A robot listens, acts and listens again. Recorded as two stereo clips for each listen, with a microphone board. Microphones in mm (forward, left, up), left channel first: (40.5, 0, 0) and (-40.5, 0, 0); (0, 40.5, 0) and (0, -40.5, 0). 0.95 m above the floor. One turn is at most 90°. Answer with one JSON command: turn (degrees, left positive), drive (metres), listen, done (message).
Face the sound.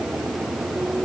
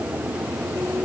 {"listen": true}
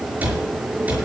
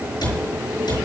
{"turn": 90}
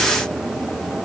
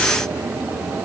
{"turn": 20}
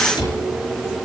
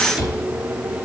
{"turn": -10}
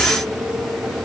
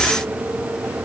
{"listen": true}
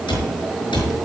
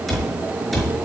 {"done": "Facing the cupboard door."}